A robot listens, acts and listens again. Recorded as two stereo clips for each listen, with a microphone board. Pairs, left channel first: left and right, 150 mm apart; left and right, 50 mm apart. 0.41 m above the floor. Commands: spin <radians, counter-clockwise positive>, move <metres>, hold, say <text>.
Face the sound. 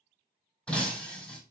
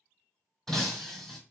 spin 0.52
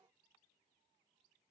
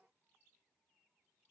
hold
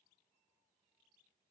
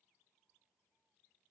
say I heard breaking glass, but can't make it out now. It was about 25° right or 145° left.